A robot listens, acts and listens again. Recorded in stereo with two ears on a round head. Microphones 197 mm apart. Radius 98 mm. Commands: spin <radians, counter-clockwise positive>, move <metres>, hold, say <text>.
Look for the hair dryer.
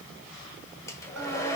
spin 0.52
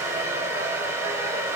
spin -0.26
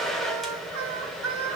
say Facing the hair dryer, 1 to 2 m away.